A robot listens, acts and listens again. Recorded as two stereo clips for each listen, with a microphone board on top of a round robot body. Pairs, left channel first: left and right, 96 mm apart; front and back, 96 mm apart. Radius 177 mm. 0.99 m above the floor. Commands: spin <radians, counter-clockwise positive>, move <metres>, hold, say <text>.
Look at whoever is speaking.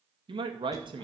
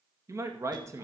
spin -2.09
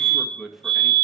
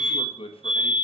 say Facing the man speaking, 2 to 4 m away.